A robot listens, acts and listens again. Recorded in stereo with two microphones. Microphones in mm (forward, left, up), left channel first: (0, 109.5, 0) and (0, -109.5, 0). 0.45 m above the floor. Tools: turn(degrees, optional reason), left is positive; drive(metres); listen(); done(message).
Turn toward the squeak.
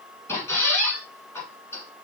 turn(degrees=30)
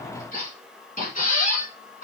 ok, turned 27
turn(degrees=140, reason="So it is at 140° left.")
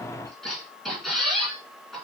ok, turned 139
done("Facing the squeak, 1 to 2 m away.")